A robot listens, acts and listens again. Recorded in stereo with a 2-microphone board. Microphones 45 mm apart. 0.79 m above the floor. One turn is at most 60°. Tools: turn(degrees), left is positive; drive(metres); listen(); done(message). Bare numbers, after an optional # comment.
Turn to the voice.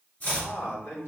# The man speaking: about 70° left or 110° left.
turn(60)
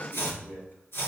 listen()
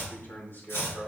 # So it is at 60° left.
turn(60)
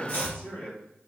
# The man speaking is now 25° left.
turn(25)
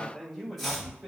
done("Facing the man speaking, 2 to 4 m away.")